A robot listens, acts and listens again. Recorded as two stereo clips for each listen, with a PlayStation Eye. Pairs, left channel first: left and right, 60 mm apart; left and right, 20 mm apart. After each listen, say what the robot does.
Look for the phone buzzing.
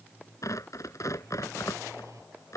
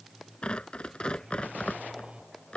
Turn 60° right.
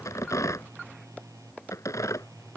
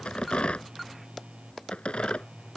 Turn 65° right.
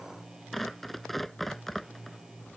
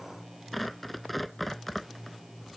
Facing the phone buzzing.